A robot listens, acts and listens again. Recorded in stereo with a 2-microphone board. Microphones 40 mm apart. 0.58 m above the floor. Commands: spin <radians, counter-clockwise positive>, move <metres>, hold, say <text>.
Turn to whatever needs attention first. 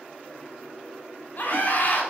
spin 0.87
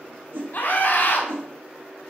spin 1.13
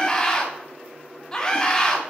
spin 0.35
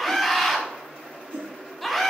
say Facing the scream, 1 to 2 m away.